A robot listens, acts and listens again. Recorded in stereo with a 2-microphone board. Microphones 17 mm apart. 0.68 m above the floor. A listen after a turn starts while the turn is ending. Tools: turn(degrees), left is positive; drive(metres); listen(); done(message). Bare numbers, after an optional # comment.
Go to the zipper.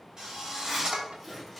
turn(-30)
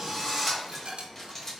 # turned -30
# So it is at 25° left.
turn(25)
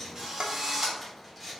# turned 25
drive(1.0)
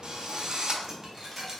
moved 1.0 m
listen()
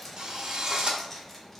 # The zipper is now 15° left.
turn(15)
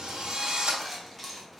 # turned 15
drive(1.0)
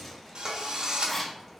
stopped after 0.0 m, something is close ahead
# The zipper is now 10° left.
turn(10)
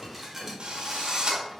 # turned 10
listen()
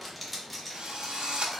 done("Arrived at the zipper, straight ahead.")